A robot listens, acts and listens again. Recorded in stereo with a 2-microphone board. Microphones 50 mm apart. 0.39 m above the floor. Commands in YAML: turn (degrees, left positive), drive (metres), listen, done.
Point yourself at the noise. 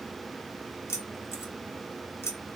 turn: 60
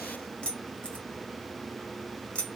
turn: 25
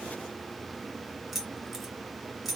done: "Found it: keys jangling, straight ahead, 1 to 2 m away."